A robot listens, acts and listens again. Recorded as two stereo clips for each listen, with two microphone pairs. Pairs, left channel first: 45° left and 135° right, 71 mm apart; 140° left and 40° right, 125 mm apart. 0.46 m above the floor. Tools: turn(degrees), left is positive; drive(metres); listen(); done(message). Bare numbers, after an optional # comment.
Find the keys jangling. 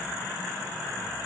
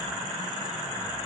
listen()
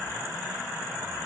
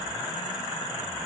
listen()
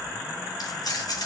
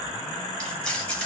# The keys jangling: 60° left.
turn(60)
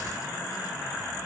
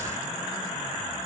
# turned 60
listen()
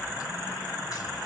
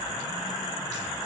listen()
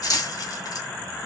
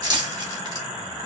# The keys jangling is now 15° left.
turn(15)
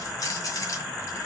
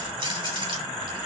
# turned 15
done("Facing the keys jangling, 2 to 4 m away.")